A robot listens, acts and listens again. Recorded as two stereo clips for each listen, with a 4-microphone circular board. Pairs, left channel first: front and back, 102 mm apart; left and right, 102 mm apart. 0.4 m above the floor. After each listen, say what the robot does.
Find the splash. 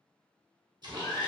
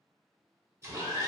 Turn 145° right.
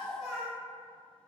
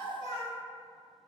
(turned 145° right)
Facing where the splash came from. I can't hear it now.